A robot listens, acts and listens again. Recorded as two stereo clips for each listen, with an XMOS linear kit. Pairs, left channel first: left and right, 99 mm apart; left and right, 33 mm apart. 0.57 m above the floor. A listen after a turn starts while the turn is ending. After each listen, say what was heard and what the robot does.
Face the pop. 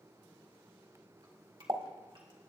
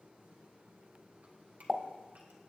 The pop: about 50° right or 130° right. Turn 50° right.
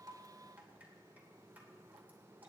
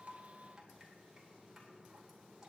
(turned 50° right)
Keep listening.
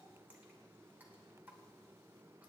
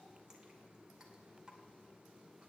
I heard a pop, but can't make it out now. It was about straight ahead or 80° right.